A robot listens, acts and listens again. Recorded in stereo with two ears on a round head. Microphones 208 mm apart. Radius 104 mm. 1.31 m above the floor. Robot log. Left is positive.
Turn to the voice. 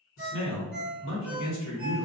note: The man speaking: about 60° left or 120° left.
cmd yaw +60
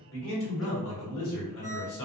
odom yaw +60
note: So it is at 60° left.
cmd yaw +60
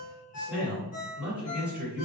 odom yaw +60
end: Facing the man speaking.